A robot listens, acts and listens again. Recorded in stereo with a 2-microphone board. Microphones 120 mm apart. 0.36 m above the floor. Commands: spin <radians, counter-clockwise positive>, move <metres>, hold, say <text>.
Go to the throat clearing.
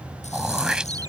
spin -0.52
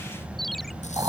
spin -2.44
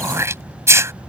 spin -0.44
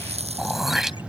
move 1.0
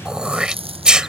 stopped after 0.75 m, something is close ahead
spin -0.17
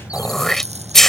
say Arrived at the throat clearing, straight ahead.